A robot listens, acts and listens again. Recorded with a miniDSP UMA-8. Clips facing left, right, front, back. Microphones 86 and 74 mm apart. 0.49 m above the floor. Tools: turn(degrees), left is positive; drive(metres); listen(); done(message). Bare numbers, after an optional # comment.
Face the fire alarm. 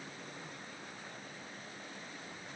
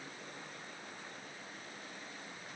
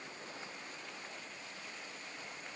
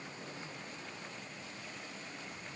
listen()
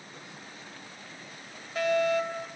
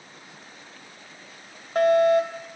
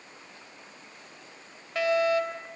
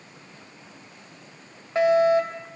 # The fire alarm: 120° right.
turn(-120)
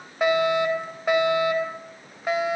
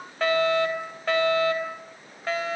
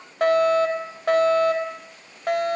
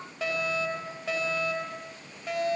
# The fire alarm is now 15° left.
turn(15)
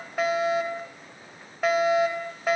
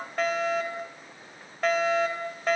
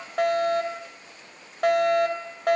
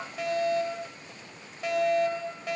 done("Found it: a fire alarm, straight ahead, 2 to 4 m away.")